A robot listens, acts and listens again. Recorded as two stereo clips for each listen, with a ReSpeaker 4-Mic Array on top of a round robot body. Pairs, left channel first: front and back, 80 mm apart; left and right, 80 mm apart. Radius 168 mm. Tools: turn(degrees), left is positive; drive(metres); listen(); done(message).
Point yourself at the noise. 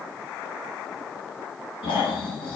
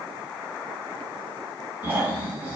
turn(degrees=-20)
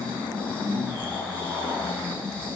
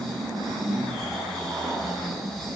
done("Facing the snoring.")